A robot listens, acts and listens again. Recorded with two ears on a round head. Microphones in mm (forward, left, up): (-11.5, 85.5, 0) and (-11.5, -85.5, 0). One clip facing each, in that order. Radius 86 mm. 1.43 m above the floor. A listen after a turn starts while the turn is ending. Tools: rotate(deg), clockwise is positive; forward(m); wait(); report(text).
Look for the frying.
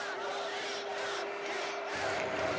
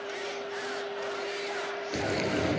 rotate(50)
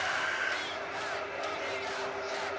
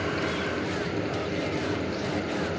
rotate(80)
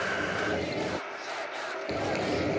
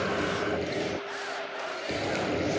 report("Found it: frying, straight ahead.")